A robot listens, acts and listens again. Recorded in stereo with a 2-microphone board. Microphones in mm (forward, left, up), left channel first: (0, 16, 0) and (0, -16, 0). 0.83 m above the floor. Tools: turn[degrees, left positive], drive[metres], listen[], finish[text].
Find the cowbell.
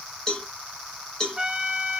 Thought: The cowbell: about 15° left or 165° left.
Action: turn[15]
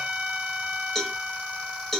Action: finish[Facing the cowbell.]